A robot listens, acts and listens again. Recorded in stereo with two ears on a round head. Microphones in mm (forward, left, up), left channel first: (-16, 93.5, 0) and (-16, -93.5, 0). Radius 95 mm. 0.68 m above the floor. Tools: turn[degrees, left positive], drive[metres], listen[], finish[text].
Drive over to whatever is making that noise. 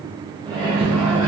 Action: turn[30]
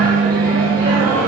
Thought: So it is at 20° right.
Action: turn[-20]
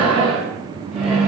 Action: drive[1.0]
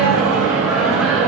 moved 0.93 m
Action: drive[1.0]
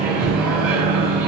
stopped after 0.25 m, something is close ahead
Action: finish[I am next to the microwave.]